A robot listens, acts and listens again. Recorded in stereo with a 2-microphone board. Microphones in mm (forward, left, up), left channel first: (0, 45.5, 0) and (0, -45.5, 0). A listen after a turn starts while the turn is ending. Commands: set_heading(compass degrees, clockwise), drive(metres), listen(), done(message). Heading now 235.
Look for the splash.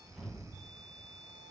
listen()
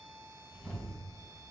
listen()
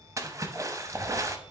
set_heading(270)
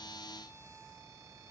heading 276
listen()
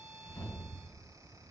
done("I heard a splash, but can't make it out now. It was about 5° left or 105° right.")